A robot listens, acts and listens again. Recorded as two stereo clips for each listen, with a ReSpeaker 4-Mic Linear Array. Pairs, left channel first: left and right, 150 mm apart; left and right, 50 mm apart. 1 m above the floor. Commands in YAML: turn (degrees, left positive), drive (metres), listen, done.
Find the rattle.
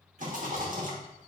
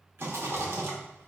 turn: -60
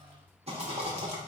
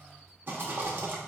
turn: -50
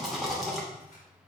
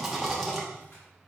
done: "Facing the rattle."